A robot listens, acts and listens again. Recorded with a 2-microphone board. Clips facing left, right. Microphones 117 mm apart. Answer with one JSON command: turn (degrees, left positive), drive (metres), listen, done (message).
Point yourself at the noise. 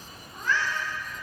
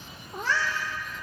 {"turn": -90}
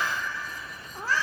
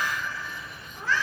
{"turn": 35}
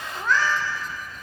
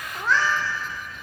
{"done": "Found it: a cat meowing, straight ahead."}